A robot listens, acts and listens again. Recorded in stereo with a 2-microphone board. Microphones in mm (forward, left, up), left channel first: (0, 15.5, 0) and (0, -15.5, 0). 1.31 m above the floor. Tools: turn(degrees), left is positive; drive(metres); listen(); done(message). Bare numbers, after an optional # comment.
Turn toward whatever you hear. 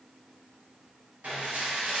# The dishes clattering: about 70° right or 110° right.
turn(-70)
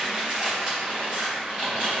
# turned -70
# So it is at 35° right.
turn(-35)
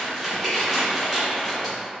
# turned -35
done("Found it: dishes clattering, straight ahead, 1 to 2 m away.")